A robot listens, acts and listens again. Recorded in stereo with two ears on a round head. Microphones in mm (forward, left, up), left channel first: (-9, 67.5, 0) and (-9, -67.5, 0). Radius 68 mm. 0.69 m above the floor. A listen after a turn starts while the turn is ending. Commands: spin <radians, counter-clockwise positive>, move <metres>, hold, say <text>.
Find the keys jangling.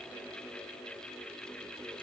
hold
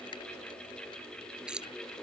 spin -0.52
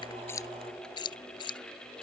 spin 0.52
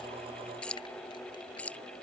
spin 0.17
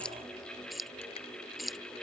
say Found it: keys jangling, straight ahead.